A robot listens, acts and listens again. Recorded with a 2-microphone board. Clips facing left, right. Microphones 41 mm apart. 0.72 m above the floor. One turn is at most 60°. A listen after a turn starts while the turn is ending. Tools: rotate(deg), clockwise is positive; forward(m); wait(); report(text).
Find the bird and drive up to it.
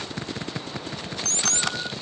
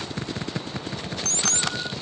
wait()
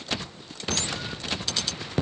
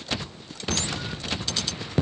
wait()
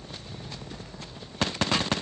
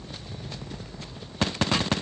report("I can't make out a bird to turn to.")